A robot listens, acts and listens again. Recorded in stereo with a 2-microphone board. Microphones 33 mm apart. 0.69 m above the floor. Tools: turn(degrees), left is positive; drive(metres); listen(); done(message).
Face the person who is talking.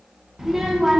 turn(degrees=-30)
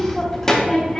turn(degrees=20)
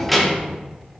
done("Found it: a child speaking, straight ahead, under 1 m away.")